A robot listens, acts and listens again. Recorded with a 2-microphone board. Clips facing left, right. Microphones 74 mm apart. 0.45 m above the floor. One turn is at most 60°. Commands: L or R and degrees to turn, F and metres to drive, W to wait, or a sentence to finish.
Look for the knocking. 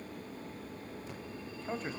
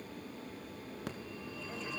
W
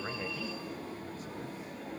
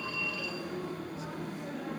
W
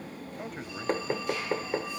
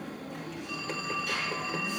L40
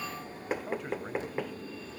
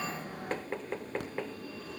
L15
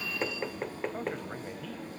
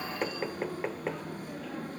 Facing the knocking, under 1 m away.